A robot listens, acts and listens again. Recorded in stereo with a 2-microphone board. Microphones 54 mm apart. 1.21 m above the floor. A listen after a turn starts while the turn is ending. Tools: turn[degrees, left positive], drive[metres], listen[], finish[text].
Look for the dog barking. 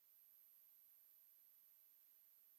Action: listen[]
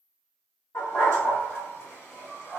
Thought: The dog barking: about 50° left or 130° left.
Action: turn[50]
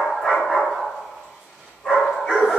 Thought: So it is at 15° left.
Action: turn[15]
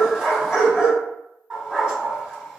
Action: finish[Facing the dog barking, 2 to 4 m away.]